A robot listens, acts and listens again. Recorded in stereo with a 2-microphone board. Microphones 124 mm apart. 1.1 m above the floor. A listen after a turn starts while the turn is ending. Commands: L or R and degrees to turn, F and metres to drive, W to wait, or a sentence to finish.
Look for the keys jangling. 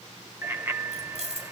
R65
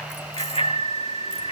W
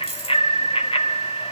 R50
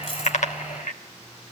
W
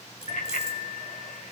W
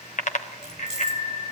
Facing the keys jangling, 2 to 4 m away.